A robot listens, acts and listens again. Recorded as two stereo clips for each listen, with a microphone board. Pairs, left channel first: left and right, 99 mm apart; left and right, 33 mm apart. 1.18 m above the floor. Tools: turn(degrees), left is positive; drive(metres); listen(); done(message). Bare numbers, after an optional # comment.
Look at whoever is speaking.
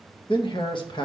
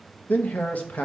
# The man speaking: about 55° left or 125° left.
turn(55)
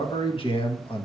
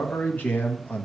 # So it is at 65° left.
turn(65)
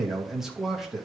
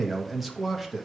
done("Facing the man speaking, 1 to 2 m away.")